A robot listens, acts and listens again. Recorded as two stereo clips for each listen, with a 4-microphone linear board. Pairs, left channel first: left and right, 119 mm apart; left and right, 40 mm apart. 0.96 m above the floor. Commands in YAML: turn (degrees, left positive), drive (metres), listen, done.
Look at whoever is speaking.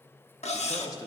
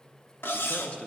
turn: 30
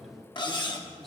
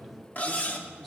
done: "Facing the man speaking."